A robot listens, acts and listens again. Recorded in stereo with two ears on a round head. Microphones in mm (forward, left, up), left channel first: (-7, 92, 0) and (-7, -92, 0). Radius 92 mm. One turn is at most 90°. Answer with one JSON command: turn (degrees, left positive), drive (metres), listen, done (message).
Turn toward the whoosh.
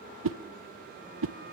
{"turn": -70}
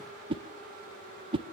{"turn": -25}
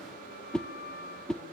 {"done": "Facing the whoosh."}